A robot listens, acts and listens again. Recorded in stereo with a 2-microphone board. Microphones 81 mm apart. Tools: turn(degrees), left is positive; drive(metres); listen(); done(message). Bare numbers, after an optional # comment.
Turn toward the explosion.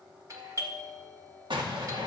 turn(-90)
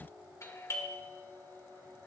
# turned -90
done("I heard an explosion from this way, but can't make it out now.")